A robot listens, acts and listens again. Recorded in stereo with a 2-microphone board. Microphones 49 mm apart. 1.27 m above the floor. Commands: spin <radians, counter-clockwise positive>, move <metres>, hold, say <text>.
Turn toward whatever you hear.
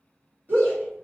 spin -0.79
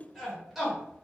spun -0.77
say Found it: a shout, straight ahead.